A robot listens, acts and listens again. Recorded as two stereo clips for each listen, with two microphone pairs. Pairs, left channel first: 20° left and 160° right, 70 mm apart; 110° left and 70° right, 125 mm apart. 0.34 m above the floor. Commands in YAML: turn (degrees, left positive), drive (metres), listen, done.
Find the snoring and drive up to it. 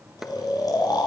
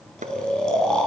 turn: 25
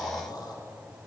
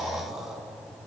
turn: 15
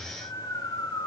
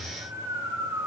drive: 1.0
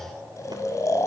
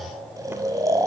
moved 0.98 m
turn: -10
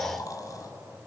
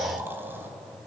drive: 1.0
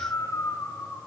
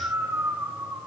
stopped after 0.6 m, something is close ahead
done: "I am next to the snoring."